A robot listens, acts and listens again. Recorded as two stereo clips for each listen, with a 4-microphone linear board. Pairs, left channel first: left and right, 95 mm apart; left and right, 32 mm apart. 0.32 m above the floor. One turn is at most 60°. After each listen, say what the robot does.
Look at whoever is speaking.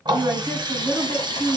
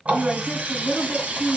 Turn 25° right.
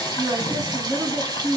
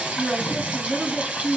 Turn 60° right.
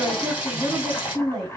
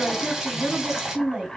Turn 60° right.
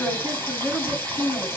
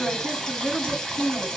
Turn 30° right.
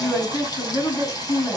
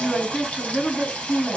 Found it: a woman speaking, straight ahead, 2 to 4 m away.